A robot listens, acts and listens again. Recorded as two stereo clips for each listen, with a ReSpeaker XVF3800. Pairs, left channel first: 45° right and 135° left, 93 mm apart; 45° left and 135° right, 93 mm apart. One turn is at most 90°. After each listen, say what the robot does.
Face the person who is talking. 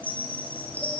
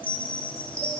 Keep listening.
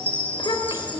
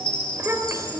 Turn 75° right.
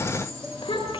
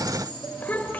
Turn 25° right.
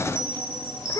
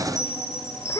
Facing the child speaking.